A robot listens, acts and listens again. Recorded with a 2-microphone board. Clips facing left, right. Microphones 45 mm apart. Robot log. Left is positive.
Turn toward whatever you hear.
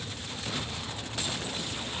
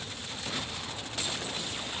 cmd idle
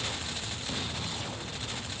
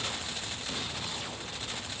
cmd idle
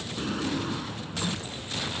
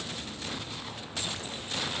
cmd yaw +90
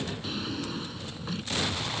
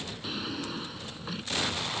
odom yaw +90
end: Facing the drawer.